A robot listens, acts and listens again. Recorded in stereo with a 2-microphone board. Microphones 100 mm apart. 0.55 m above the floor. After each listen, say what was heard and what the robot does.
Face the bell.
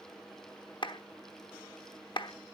Keep listening.
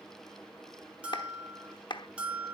Turn 30° right.
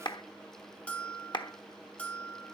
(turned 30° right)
So it is at 15° left. Turn 15° left.
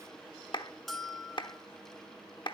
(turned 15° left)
Found it: a bell, straight ahead.